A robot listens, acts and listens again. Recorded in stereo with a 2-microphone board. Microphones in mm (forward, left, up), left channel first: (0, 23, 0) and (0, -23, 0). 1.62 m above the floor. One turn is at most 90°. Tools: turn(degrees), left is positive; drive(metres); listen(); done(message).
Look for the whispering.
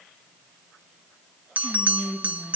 turn(degrees=30)
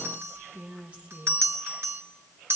turn(degrees=-25)
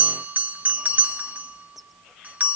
done("Facing the whispering.")